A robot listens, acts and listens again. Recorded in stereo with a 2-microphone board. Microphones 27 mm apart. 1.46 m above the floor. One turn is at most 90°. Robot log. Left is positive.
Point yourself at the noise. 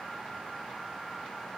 cmd idle
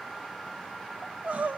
cmd yaw -90
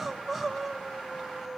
end: Found it: crying, straight ahead, 1 to 2 m away.